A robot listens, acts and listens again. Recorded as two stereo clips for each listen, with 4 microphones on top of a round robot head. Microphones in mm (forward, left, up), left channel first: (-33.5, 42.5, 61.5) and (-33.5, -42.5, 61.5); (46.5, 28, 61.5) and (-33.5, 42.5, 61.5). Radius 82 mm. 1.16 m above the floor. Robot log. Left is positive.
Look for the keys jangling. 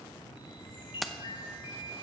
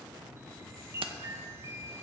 note: The keys jangling: straight behind.
cmd yaw +180
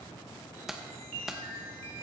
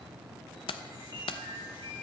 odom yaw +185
end: Facing the keys jangling, under 1 m away.